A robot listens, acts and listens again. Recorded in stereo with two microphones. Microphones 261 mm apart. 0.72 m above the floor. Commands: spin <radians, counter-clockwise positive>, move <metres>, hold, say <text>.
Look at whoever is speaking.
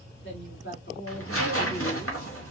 spin 0.87
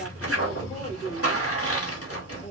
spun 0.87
spin 0.52
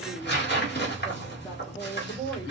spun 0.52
spin 0.26
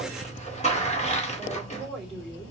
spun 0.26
say Facing the woman speaking.